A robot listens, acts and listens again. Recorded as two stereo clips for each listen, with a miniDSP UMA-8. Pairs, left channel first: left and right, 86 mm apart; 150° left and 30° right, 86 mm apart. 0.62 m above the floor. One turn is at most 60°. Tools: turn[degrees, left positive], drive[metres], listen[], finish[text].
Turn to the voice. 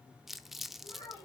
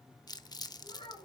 Thought: The child speaking: 130° left.
Action: turn[60]
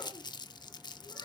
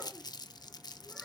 Thought: Nothing new. It was at 70° left.
Action: turn[60]
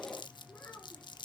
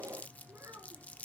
Thought: The child speaking is now 25° left.
Action: turn[25]
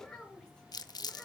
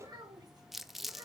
Thought: The child speaking is now 10° left.
Action: turn[10]
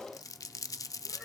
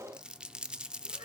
Action: listen[]
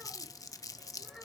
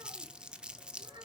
Action: finish[Found it: a child speaking, straight ahead, over 4 m away.]